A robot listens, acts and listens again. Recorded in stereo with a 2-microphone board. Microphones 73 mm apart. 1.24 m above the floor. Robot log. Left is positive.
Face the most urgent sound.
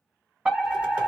cmd yaw -30
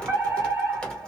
note: So it is at 135° right.
cmd yaw -135
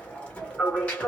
note: The fire alarm is now 10° left.
cmd yaw +10
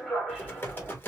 end: Found it: a fire alarm, straight ahead, 1 to 2 m away.